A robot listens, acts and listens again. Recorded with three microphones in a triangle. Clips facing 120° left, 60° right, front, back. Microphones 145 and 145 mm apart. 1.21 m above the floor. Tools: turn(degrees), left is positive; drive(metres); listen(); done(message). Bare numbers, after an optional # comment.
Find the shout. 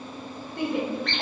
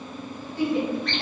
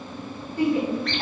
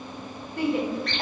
# The shout: 155° left.
turn(155)
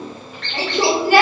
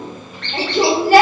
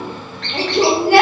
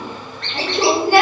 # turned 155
done("Found it: a shout, straight ahead.")